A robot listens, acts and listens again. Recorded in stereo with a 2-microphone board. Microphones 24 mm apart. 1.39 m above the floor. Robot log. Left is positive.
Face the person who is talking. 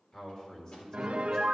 note: The man speaking: about 25° left or 155° left.
cmd yaw +25
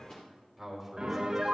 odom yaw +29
end: Found it: a man speaking, straight ahead, 2 to 4 m away.